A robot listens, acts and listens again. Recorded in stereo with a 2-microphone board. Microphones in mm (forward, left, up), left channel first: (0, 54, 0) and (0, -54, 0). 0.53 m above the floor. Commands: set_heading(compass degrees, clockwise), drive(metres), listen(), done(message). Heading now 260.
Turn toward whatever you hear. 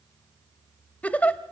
set_heading(230)
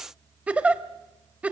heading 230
set_heading(245)
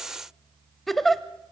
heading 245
done("Found it: a giggle, straight ahead, under 1 m away.")